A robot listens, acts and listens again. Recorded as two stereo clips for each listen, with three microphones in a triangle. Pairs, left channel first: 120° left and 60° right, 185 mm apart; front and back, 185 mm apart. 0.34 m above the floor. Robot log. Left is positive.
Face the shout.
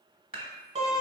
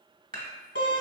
cmd idle
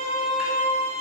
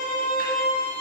cmd idle
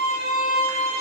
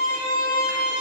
end: I can't make out a shout to turn to.